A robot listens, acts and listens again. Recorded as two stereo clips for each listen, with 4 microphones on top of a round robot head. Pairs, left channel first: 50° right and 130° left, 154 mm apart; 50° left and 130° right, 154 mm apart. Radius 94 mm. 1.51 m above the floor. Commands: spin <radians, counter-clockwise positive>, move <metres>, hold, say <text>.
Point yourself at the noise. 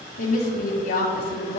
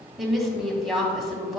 spin -0.70
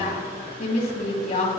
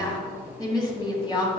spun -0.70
spin -0.17
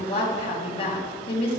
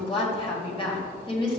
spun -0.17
say Facing the woman speaking, 2 to 4 m away.